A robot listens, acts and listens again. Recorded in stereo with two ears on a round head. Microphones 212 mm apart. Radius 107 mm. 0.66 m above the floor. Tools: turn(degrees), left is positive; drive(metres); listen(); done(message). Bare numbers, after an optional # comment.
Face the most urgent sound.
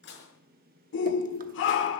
# The shout: about 55° left or 125° left.
turn(55)
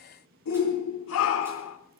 # So it is at 65° left.
turn(65)
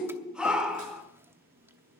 done("Found it: a shout, straight ahead.")